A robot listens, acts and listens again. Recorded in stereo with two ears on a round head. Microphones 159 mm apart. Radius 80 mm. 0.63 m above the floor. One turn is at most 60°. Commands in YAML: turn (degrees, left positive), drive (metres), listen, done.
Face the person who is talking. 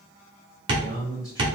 turn: 20
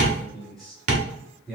done: "Found it: a man speaking, straight ahead."